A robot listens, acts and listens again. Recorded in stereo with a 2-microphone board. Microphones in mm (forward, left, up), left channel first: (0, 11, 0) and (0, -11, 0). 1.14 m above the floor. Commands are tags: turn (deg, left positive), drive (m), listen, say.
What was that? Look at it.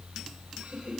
<turn deg="-65"/>
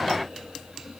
<listen/>
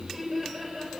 <say>Facing the laughter, over 4 m away.</say>